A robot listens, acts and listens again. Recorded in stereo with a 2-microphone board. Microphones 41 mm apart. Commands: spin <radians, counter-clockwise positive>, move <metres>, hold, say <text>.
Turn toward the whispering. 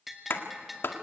hold
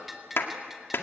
hold
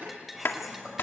spin -0.52
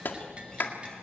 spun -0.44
hold
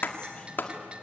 hold
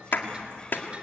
spin 0.35
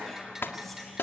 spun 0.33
say Found it: whispering, straight ahead.